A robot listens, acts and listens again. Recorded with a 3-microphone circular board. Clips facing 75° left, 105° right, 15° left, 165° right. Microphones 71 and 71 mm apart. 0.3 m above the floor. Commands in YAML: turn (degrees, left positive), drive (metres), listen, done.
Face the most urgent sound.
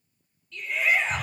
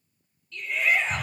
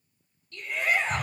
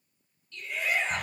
turn: -15
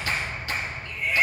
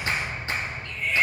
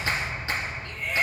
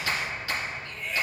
done: "Found it: a shout, straight ahead, 2 to 4 m away."